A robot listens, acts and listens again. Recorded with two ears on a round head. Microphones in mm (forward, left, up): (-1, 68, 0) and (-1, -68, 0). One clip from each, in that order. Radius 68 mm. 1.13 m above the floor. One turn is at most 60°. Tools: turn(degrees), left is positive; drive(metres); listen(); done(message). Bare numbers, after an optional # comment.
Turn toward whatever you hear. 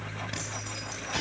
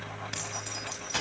# The keys jangling: about 30° right or 150° right.
turn(-30)
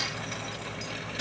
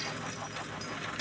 listen()
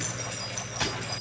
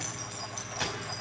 done("Facing the keys jangling.")